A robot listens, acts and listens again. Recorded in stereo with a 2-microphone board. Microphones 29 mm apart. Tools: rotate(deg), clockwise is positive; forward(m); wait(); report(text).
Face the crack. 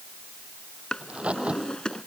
rotate(45)
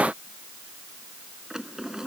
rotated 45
wait()
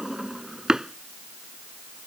report("I heard a crack, but can't make it out now. It was about straight ahead or 90° right.")